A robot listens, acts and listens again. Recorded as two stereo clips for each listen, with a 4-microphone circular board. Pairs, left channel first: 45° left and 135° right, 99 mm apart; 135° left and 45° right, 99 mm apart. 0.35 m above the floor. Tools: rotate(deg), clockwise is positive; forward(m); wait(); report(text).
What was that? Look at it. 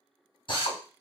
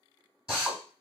rotate(-35)
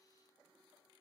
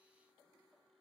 wait()
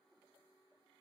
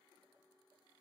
wait()
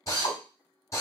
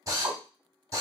report("Found it: a drill, straight ahead.")